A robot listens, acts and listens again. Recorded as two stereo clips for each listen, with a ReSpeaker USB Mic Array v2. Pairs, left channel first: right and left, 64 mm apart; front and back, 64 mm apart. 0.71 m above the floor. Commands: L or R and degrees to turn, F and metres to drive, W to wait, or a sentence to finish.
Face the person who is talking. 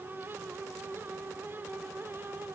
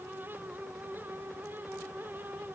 W
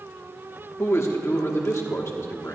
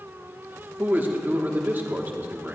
R125
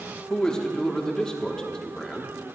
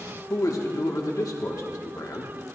R10
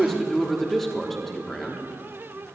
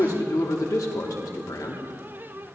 Found it: a man speaking, straight ahead, 1 to 2 m away.